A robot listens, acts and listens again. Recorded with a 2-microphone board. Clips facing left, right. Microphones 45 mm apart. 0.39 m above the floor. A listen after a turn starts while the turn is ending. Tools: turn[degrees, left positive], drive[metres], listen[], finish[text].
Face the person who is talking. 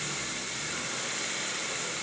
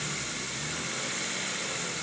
Action: listen[]
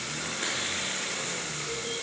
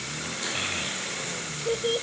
Thought: The child speaking: about 65° right or 115° right.
Action: turn[-65]
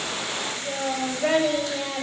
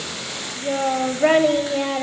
Thought: So it is at 35° right.
Action: turn[-35]
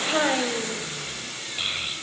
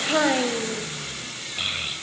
Thought: The child speaking is now 10° right.
Action: turn[-10]
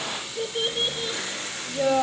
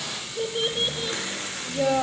Action: finish[Found it: a child speaking, straight ahead, under 1 m away.]